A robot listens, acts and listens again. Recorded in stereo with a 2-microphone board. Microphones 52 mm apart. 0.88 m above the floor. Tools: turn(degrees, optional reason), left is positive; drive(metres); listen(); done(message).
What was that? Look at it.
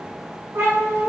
turn(degrees=-60, reason="The cat meowing: about 60° right or 120° right.")
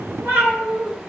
turn(degrees=-55, reason="So it is at 55° right.")
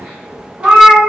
turn(degrees=-20, reason="The cat meowing is now 20° right.")
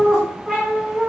done("Found it: a cat meowing, straight ahead, 1 to 2 m away.")